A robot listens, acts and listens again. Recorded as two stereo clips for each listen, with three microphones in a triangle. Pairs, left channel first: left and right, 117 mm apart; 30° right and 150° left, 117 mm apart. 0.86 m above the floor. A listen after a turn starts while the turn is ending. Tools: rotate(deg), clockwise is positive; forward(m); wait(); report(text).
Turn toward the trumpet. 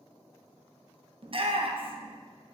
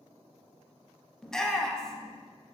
wait()
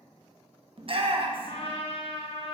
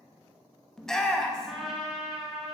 rotate(-65)
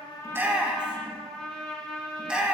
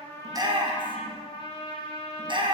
report("Found it: a trumpet, straight ahead.")